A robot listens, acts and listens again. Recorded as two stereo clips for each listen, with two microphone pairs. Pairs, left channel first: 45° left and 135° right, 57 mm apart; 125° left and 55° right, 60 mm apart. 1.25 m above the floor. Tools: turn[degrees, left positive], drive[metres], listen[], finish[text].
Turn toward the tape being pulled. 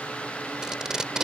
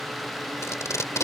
Thought: The tape being pulled: 150° left.
Action: turn[150]
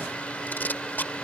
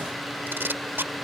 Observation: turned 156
Action: finish[Facing the tape being pulled.]